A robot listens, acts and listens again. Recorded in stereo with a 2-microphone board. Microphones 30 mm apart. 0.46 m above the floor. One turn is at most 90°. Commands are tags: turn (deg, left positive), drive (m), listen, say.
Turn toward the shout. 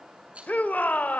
<turn deg="60"/>
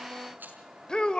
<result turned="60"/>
<turn deg="30"/>
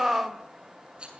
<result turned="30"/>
<turn deg="-15"/>
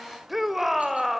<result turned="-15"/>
<turn deg="-10"/>
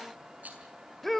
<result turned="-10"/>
<say>Facing the shout.</say>